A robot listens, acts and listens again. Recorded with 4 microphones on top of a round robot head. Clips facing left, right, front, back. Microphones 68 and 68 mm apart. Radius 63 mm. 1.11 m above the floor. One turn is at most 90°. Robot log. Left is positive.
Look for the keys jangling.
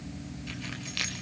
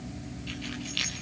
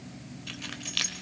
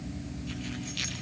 note: The keys jangling: 20° left.
cmd yaw +20
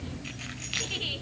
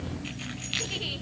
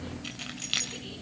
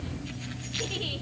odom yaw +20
end: Facing the keys jangling.